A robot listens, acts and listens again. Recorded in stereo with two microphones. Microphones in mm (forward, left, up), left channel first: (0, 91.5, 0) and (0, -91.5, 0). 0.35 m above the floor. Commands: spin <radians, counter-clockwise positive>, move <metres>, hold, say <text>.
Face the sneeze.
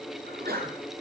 spin -1.05
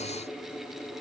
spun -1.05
hold
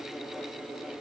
say I heard a sneeze, but can't make it out now. It was about straight ahead or 60° right.